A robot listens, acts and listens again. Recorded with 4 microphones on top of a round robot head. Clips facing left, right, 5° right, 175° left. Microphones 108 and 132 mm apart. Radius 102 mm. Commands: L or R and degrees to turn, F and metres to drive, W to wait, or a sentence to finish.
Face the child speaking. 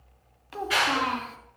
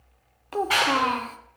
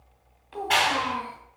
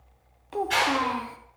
R135
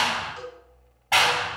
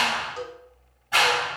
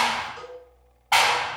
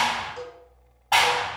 W
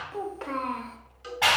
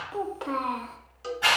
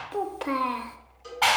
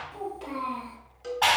R10
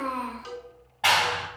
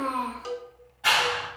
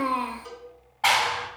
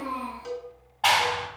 Found it: a child speaking, straight ahead.